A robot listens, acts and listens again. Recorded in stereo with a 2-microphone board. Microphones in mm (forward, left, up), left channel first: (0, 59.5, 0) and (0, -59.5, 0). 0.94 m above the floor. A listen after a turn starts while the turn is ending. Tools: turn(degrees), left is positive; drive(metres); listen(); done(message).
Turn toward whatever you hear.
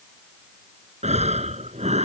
turn(degrees=-70)
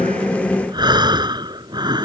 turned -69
turn(degrees=-40)
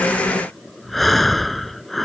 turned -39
done("Facing the breathing.")